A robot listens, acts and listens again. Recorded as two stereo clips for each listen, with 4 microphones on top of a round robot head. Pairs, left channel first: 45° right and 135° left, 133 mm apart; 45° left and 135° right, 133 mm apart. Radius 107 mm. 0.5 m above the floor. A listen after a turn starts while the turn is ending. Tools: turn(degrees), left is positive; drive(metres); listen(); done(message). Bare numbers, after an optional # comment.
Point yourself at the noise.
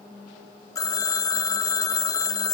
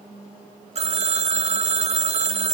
# The phone ringing: 105° right.
turn(-105)
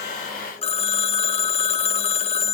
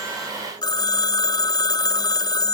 # The phone ringing is now 10° right.
turn(-10)
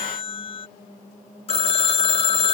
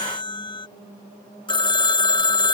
done("Found it: a phone ringing, straight ahead.")